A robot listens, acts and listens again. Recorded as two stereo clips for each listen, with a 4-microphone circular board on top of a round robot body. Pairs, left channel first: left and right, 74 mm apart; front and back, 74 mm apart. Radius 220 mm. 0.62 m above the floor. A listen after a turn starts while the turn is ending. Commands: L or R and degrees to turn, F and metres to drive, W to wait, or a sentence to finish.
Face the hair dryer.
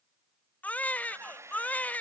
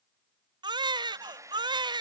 R140
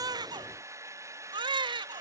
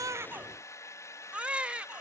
R45
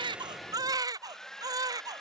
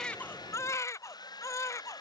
Found it: a hair dryer, straight ahead.